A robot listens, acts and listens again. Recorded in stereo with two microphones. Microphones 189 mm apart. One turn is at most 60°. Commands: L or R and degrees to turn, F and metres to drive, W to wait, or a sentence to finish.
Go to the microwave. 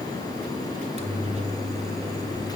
R35
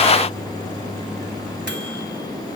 R60
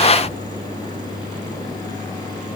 R45
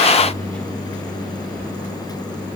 F1.0
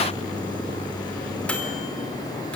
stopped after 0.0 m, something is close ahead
Blocked. The microwave is further on, straight ahead.